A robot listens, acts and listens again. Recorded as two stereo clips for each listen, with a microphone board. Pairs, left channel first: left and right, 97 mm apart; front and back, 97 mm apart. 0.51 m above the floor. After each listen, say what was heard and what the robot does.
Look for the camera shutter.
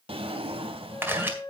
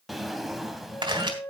The camera shutter: 155° right. Turn 155° right.
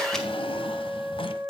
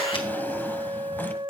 Keep listening.
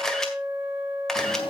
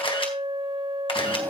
Found it: a camera shutter, straight ahead.